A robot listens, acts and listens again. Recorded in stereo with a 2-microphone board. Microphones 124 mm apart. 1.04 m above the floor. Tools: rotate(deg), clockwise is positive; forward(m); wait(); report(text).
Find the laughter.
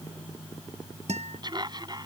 rotate(40)
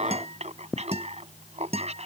rotate(110)
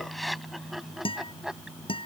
report("Found it: laughter, straight ahead.")